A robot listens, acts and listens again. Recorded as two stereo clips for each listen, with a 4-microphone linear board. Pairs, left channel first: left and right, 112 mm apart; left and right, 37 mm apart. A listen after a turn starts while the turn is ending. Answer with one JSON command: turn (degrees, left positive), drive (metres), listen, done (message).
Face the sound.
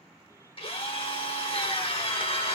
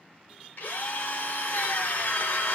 {"turn": 50}
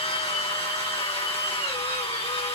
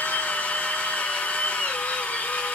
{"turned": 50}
{"turn": 75}
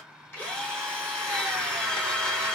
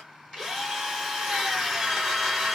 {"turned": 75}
{"turn": 10}
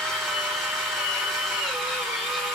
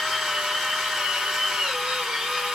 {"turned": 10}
{"done": "Facing the drill."}